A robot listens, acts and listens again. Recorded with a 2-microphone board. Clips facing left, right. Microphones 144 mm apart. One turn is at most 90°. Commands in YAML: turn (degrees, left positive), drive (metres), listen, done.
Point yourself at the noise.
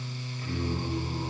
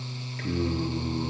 turn: -90
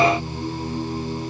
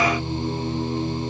done: "Facing the singing."